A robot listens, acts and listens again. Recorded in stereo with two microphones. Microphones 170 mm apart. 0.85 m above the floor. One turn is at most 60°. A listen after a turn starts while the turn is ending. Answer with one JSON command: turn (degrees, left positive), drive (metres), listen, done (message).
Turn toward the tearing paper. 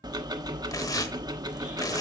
{"turn": 20}
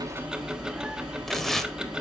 {"done": "Facing the tearing paper."}